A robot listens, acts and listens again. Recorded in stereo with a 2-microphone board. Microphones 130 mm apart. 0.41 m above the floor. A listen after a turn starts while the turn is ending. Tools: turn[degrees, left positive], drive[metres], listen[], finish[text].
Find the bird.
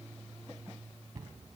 Action: listen[]
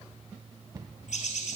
Thought: The bird: about 70° left or 110° left.
Action: turn[70]
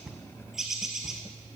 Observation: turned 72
Action: finish[Facing the bird.]